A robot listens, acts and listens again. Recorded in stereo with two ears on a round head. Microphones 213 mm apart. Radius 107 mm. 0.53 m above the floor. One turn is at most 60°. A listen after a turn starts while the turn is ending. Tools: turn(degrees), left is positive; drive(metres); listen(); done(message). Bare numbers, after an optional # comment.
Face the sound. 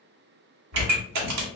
turn(-60)
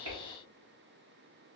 # Nothing new. It was at 30° right.
turn(-30)
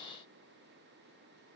done("I heard a pop from this way, but can't make it out now.")